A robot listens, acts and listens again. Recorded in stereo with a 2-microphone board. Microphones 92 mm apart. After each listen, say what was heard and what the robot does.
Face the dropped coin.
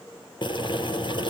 Keep listening.
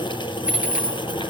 Turn 30° right.
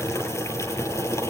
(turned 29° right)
Keep listening.
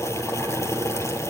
I heard a dropped coin, but can't make it out now. It was about 15° left or 140° right.